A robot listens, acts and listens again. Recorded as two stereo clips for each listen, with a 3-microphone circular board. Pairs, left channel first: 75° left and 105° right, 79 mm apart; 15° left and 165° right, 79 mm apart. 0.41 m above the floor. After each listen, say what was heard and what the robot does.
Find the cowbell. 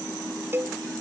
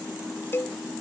The cowbell: 45° right. Turn 45° right.
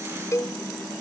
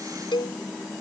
The cowbell is now 25° left. Turn 25° left.
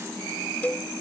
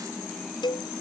Facing the cowbell.